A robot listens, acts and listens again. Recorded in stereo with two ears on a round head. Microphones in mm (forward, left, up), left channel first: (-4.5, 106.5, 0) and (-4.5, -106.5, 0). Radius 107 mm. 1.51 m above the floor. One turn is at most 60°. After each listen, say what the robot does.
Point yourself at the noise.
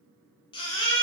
Turn 20° left.
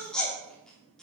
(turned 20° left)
Facing the baby crying.